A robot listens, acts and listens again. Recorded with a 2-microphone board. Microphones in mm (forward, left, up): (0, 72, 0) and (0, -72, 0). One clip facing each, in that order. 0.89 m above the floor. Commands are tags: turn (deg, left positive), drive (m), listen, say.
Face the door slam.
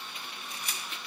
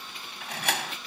<turn deg="-90"/>
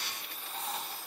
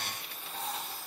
<say>I heard a door slam from this way, but can't make it out now.</say>